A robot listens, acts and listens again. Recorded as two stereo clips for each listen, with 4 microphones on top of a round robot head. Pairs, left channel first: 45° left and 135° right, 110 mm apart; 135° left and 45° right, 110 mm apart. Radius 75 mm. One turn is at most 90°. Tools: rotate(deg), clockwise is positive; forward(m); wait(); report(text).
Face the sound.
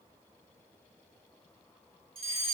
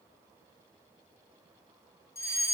rotate(90)
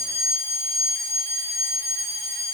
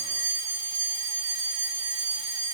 rotate(85)
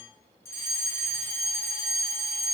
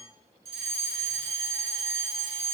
rotate(20)
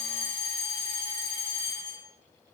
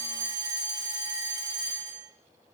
report("Facing the fire alarm, over 4 m away.")